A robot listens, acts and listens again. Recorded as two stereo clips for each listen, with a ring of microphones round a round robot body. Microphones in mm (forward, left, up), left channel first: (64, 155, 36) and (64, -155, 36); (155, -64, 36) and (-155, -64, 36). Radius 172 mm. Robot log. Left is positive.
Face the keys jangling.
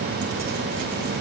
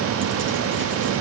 cmd idle
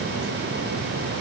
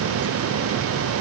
cmd idle
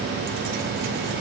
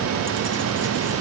end: I can't make out keys jangling.